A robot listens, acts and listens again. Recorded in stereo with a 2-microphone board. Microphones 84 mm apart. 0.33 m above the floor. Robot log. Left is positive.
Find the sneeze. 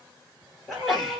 cmd yaw +30
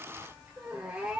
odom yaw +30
cmd idle
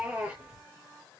end: I heard a sneeze, but can't make it out now. It was about 30° right or 150° left.